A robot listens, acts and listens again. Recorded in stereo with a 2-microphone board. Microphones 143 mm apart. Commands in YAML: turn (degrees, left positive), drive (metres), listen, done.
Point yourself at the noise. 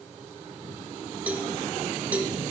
turn: -30
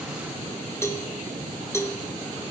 turn: 20
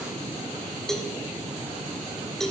done: "Facing the cowbell, 1 to 2 m away."